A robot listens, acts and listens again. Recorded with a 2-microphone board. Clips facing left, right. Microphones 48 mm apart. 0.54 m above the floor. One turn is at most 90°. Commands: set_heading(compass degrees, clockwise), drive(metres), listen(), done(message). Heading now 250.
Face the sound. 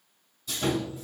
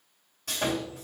set_heading(315)
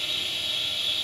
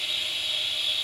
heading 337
set_heading(347)
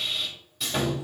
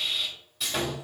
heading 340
done("Facing the sawing, 2 to 4 m away.")